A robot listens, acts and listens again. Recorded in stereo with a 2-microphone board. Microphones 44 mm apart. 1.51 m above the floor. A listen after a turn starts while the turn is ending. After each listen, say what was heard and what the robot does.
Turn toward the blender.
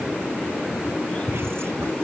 Keep listening.
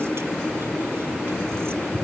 Keep listening.
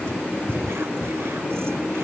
I can't make out a blender to turn to.